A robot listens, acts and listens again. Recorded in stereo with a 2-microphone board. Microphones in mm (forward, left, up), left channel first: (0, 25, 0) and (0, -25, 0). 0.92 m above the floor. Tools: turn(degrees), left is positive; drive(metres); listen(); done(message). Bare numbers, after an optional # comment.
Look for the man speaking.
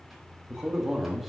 turn(-30)
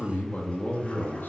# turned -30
# So it is at 40° left.
turn(40)
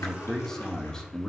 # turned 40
# The man speaking is now 15° left.
turn(15)
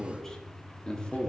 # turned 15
# The man speaking is now 20° left.
turn(20)
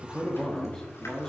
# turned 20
# The man speaking is now 10° left.
turn(10)
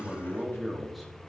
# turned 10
done("Facing the man speaking.")